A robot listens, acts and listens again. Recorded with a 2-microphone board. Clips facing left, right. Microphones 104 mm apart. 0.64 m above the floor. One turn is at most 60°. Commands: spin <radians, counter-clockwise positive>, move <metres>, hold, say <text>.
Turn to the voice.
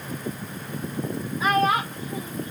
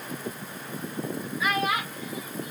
spin 0.70
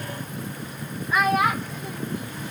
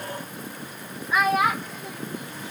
say Found it: a child speaking, straight ahead.